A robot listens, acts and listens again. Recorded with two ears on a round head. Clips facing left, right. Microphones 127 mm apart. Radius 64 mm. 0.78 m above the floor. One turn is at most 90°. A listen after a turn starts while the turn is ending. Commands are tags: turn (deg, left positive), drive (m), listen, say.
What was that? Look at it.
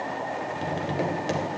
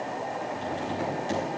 <turn deg="70"/>
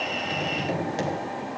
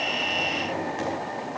<turn deg="35"/>
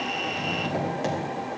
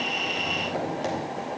<say>Found it: tapping, straight ahead, 2 to 4 m away.</say>